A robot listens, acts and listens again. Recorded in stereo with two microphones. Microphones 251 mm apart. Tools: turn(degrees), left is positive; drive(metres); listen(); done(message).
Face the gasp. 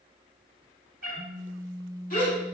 turn(degrees=30)
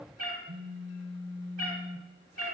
listen()
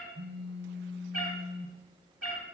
done("I heard a gasp, but can't make it out now. It was about straight ahead or 120° left.")